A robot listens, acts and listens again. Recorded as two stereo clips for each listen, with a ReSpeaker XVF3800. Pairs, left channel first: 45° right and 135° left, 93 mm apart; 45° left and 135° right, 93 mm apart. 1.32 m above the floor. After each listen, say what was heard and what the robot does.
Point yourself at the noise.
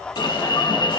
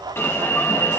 The alarm: 20° right. Turn 20° right.
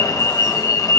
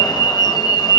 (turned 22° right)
Found it: an alarm, straight ahead, 1 to 2 m away.